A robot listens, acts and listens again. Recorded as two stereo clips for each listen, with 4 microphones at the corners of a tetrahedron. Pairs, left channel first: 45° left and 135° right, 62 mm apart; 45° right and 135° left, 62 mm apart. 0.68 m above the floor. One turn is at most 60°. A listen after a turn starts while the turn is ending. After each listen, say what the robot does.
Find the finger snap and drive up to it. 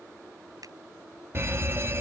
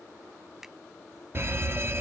Turn 60° right.
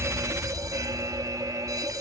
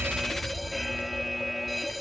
Turn 60° right.
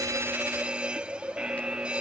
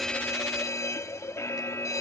Turn 20° right.
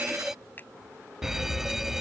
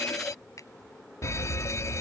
Turn 15° right.
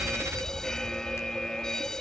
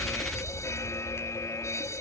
Keep listening.
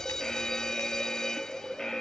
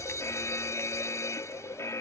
Keep listening.
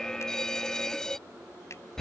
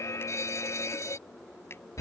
I heard a finger snap from this way, but can't make it out now. I did not reach it.